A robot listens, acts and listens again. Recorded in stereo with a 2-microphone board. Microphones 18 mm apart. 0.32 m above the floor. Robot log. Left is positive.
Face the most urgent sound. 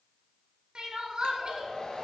note: The crying: about 50° right or 130° right.
cmd yaw -50
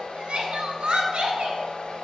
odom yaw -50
note: So it is at 75° right.
cmd yaw -75
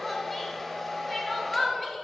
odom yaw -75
end: Facing the crying.